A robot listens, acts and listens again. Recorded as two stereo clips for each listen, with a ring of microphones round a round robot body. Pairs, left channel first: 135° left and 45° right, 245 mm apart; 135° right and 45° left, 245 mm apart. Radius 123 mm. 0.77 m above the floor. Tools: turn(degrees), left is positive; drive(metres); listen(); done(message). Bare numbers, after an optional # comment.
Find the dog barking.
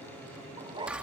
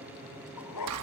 # The dog barking: 120° right.
turn(-120)
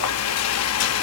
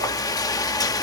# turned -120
listen()
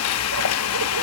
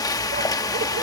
listen()
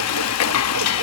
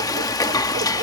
done("I heard a dog barking from this way, but can't make it out now.")